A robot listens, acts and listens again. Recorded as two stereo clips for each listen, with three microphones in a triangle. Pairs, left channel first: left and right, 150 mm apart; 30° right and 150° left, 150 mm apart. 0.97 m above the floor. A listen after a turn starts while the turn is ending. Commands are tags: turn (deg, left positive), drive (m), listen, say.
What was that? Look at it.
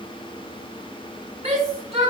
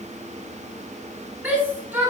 <turn deg="-130"/>
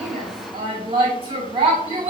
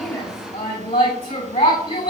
<turn deg="-40"/>
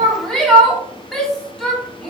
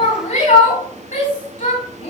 <say>Facing the shout, 2 to 4 m away.</say>